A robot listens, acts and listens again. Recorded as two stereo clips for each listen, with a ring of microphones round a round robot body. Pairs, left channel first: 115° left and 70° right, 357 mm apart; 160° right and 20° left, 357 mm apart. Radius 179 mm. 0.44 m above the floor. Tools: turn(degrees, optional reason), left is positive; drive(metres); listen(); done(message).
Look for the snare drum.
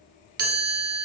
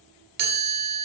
listen()
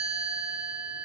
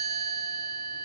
listen()
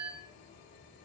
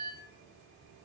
done("I can't make out a snare drum, only a chime.")